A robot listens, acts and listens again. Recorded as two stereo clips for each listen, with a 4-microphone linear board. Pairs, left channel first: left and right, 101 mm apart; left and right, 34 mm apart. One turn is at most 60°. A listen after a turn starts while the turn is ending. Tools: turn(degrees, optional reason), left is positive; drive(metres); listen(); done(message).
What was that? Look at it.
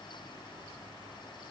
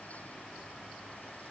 listen()
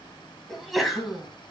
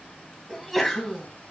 turn(degrees=30)
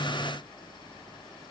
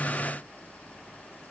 listen()
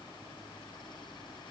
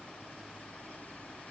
done("I heard a sneeze, but can't make it out now. It was about 30° right or 150° left.")